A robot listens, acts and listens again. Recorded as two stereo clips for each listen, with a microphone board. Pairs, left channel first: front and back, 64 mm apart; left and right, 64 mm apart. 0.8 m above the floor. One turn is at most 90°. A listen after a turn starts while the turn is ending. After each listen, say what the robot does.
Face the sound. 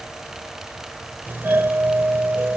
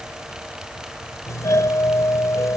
Turn 90° left.
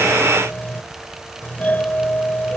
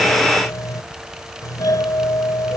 Turn 65° left.
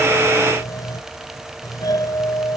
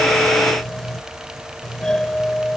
Turn 10° left.
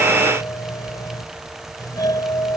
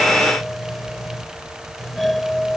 Facing the doorbell.